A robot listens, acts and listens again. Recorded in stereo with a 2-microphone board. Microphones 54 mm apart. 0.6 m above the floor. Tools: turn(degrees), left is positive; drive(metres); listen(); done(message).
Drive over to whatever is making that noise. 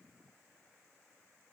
listen()
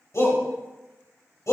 turn(degrees=65)
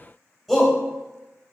drive(metres=1.0)
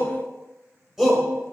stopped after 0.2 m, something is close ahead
done("Something is in my way. I am facing the shout but have not reached it.")